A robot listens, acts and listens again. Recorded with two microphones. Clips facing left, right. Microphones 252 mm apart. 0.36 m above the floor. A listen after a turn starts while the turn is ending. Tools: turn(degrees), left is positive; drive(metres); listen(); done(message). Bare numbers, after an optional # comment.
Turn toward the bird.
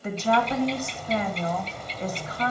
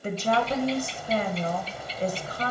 turn(-30)
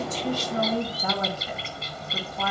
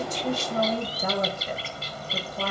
# So it is at 135° right.
turn(-135)
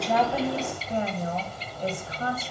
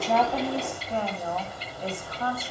# The bird is now 15° right.
turn(-15)
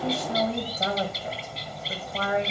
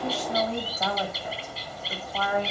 done("Found it: a bird, straight ahead, 1 to 2 m away.")